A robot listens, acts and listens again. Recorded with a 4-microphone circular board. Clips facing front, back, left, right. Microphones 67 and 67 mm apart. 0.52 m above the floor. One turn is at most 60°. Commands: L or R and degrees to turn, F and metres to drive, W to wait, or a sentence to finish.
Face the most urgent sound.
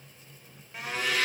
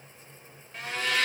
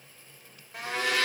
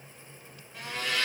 W
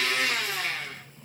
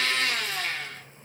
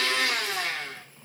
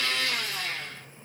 W
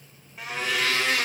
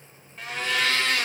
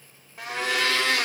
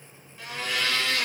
I can't make out anything urgent to turn to.